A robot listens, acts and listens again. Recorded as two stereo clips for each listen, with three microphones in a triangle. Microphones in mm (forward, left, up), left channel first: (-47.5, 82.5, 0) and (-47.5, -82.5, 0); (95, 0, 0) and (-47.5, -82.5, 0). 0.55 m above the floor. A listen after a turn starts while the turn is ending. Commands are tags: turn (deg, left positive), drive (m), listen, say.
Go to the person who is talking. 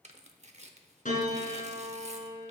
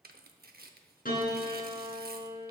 <listen/>
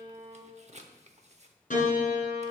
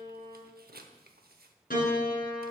<listen/>
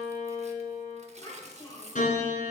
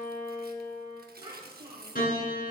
<turn deg="145"/>
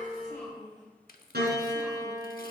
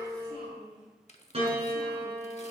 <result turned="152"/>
<drive m="1.0"/>
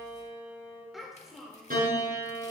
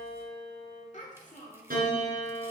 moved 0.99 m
<drive m="1.0"/>
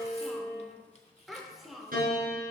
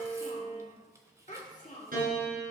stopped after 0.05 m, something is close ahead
<say>I am next to the child speaking.</say>